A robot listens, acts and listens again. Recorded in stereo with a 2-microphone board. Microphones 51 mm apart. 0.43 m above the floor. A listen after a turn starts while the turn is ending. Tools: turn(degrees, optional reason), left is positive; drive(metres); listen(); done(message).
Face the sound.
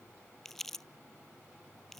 turn(degrees=30)
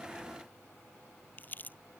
turn(degrees=145, reason="So it is at 145° left.")
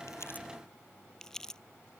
turn(degrees=10, reason="The crumpling is now 10° left.")
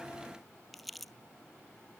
done("Facing the crumpling.")